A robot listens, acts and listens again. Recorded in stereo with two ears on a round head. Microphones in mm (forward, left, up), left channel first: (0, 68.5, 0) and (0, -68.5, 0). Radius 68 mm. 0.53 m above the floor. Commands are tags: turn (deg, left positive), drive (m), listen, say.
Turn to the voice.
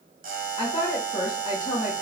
<turn deg="35"/>
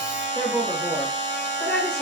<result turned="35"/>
<say>Found it: a woman speaking, straight ahead.</say>